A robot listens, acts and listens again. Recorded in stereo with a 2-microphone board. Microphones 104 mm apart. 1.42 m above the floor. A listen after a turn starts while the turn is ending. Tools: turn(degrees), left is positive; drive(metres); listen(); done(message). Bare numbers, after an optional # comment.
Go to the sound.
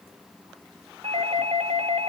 turn(-90)
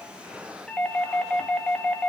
# So it is at 10° left.
turn(10)
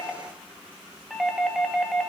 drive(1.0)
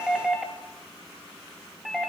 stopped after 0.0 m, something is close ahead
done("Something is in my way. I am facing the doorbell but have not reached it.")